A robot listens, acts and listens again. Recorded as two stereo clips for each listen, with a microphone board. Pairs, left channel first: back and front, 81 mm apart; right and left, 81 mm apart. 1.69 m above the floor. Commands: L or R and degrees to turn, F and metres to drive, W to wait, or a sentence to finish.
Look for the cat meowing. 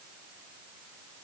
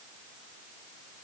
W
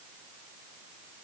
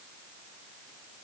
W
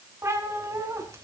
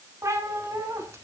L45
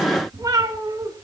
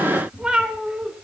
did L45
L15
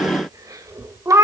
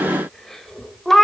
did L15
Facing the cat meowing.